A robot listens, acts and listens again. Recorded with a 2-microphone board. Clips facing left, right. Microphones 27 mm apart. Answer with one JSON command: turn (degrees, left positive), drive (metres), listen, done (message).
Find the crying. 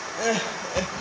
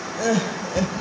{"turn": 25}
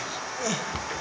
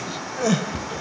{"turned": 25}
{"done": "Facing the crying."}